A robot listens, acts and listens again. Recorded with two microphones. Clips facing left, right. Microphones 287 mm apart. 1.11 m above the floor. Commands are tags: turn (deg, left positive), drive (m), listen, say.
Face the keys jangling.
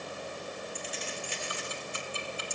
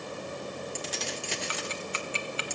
<turn deg="-90"/>
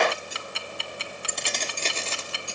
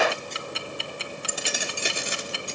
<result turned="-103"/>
<turn deg="-15"/>
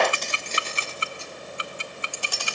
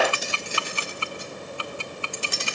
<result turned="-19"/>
<turn deg="-20"/>
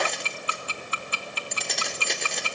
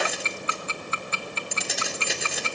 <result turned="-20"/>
<say>Found it: keys jangling, straight ahead, 2 to 4 m away.</say>